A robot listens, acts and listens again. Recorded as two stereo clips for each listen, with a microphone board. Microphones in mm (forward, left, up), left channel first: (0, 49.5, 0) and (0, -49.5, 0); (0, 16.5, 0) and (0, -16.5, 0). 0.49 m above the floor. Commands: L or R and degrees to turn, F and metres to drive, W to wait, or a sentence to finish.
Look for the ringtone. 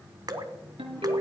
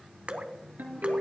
R90
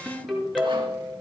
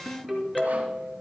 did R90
Found it: a ringtone, straight ahead.